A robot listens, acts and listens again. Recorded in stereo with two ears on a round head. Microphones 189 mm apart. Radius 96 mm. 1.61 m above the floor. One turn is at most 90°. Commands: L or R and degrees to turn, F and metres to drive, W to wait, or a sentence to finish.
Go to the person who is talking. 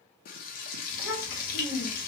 L55
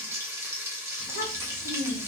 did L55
L65
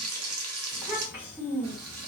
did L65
F1.0
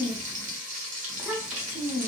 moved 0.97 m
R15
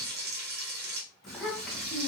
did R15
F1.0
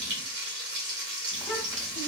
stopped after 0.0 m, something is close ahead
W
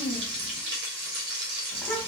I am next to the child speaking.